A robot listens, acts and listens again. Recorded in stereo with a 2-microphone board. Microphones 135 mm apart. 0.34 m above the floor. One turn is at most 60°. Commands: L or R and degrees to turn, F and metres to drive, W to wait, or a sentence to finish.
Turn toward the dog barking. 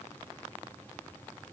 W
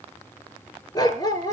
L30
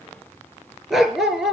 Facing the dog barking, 2 to 4 m away.